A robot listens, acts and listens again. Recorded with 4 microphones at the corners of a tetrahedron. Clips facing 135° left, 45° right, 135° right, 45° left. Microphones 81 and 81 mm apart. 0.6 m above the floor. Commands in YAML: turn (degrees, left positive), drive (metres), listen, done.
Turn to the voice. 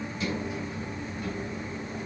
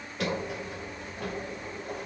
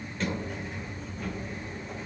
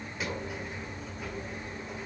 listen: true
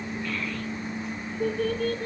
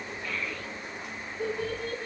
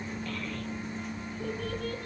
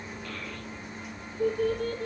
turn: 40
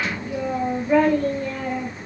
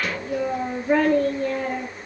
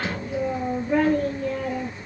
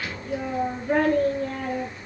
done: "Facing the child speaking, over 4 m away."